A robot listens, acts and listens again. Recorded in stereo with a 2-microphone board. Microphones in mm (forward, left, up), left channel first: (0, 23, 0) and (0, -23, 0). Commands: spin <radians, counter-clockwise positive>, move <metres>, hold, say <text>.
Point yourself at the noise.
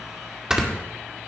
spin -0.52
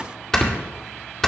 spin 0.17
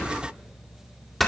say Found it: snoring, straight ahead.